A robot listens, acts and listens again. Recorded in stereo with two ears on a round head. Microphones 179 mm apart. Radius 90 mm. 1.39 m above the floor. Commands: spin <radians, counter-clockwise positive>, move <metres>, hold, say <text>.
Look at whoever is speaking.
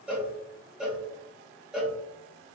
hold
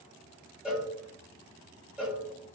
hold
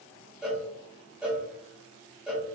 say I can't make out anyone speaking, only a cowbell.